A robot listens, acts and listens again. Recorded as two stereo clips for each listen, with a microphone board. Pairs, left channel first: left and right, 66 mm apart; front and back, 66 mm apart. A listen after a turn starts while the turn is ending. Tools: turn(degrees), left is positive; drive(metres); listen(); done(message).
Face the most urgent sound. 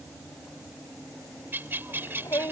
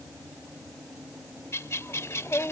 turn(degrees=50)
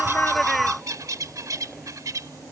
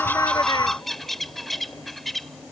listen()
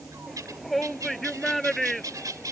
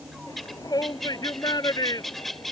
done("Facing the shout.")